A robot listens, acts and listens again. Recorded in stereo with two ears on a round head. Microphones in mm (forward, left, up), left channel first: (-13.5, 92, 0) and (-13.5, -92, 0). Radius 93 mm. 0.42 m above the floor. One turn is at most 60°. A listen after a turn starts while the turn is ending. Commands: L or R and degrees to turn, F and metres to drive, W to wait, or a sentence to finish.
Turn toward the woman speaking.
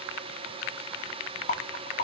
W
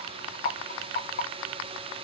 W
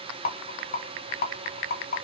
I can't make out a woman speaking to turn to.